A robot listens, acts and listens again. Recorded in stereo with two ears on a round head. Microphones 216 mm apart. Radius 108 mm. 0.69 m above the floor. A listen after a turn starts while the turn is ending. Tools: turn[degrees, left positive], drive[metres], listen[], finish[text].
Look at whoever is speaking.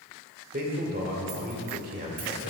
Thought: The man speaking: about 35° right or 145° right.
Action: turn[-35]
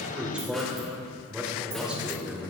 Action: finish[Found it: a man speaking, straight ahead.]